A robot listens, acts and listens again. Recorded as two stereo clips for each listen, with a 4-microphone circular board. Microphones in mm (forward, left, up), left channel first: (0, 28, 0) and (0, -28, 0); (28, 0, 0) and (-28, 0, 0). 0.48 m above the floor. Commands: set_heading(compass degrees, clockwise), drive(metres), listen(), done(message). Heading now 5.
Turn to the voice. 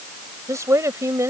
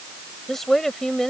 set_heading(85)
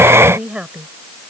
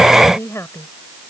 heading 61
set_heading(81)
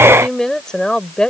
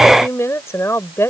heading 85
set_heading(70)
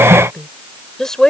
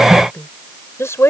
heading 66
set_heading(56)
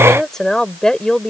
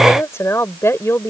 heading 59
set_heading(44)
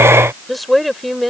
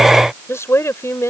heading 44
done("Found it: a woman speaking, straight ahead.")